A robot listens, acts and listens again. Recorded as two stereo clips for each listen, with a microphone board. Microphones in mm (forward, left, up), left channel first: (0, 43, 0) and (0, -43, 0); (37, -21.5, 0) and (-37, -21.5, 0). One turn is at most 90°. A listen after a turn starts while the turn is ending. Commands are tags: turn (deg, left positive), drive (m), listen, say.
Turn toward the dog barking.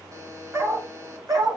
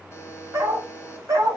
<turn deg="-90"/>
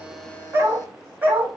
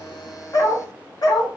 <turn deg="-20"/>
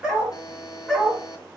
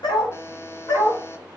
<turn deg="15"/>
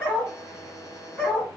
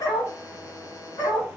<turn deg="15"/>
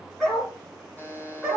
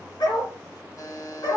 <say>Found it: a dog barking, straight ahead, 2 to 4 m away.</say>